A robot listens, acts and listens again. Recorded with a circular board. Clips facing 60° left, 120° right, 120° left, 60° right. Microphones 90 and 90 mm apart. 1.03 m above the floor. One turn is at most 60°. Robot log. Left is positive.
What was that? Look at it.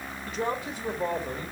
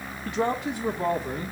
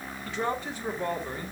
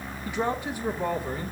note: The man speaking: 140° right.
cmd yaw -60
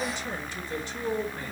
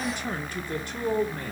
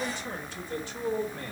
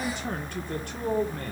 note: The man speaking is now 90° right.
cmd yaw -60
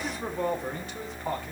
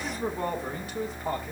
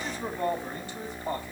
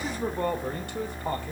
note: The man speaking is now 35° right.
cmd yaw -35
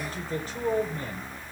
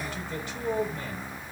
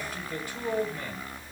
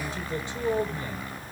end: Facing the man speaking, over 4 m away.